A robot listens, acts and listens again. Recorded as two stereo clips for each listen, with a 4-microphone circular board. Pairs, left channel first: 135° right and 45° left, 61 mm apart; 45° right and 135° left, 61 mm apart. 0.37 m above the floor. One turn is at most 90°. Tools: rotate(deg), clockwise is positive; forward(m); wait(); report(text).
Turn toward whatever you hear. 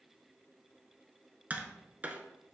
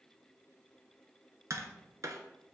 rotate(-90)
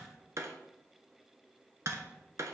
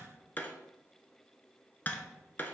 rotate(-15)
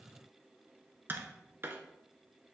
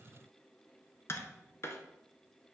report("Found it: tapping, straight ahead, under 1 m away.")